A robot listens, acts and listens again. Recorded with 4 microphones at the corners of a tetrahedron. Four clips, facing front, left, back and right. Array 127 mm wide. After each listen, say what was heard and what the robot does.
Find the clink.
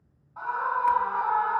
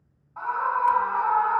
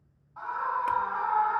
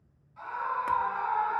Keep listening.
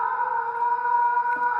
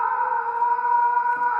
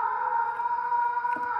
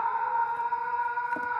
Keep listening.
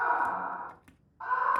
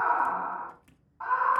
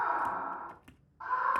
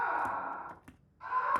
The clink: 100° right. Turn 100° right.
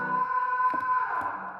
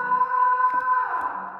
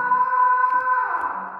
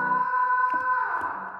Keep listening.
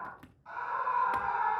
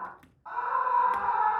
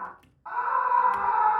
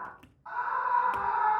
The clink is now 15° right. Turn 15° right.
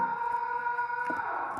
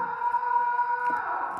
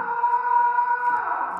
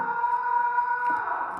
Keep listening.
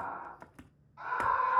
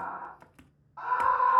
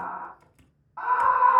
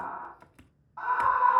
Found it: a clink, straight ahead.